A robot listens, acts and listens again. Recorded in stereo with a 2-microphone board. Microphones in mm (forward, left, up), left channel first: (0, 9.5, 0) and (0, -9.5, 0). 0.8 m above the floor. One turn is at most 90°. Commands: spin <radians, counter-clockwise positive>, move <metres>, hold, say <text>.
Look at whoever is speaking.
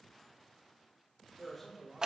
spin 0.52
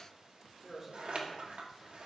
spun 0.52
spin -0.44
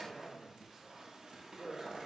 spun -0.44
spin -0.44
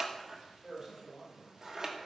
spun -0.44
spin -0.26
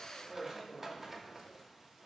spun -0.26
say Facing the man speaking, 2 to 4 m away.